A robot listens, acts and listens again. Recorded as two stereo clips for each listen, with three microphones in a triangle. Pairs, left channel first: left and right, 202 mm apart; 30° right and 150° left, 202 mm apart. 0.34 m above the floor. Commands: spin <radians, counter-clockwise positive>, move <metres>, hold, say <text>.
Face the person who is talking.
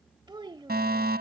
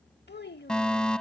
spin -0.44
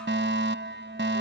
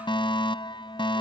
hold
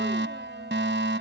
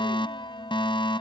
hold
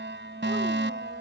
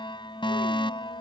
say Facing where the child speaking came from. I can't hear it now.